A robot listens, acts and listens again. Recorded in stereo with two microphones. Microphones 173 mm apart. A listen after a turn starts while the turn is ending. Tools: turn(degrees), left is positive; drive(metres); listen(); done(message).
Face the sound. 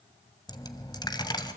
turn(degrees=25)
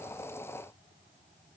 listen()
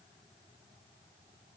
done("I heard a dropped coin, but can't make it out now. It was about straight ahead or 130° left.")